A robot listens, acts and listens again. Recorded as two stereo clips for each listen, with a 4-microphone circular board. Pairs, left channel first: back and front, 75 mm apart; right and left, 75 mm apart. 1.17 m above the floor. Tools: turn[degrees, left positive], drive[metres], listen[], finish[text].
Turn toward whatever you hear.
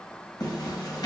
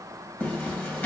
Thought: The zipper: 150° right.
Action: turn[-150]
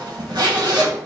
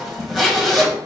Action: finish[Found it: a zipper, straight ahead.]